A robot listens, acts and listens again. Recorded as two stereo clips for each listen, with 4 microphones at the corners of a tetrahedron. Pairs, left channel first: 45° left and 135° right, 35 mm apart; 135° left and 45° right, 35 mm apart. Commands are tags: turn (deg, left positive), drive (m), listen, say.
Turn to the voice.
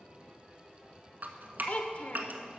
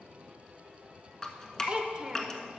<turn deg="15"/>
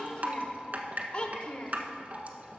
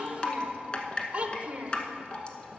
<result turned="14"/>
<say>Facing the child speaking, under 1 m away.</say>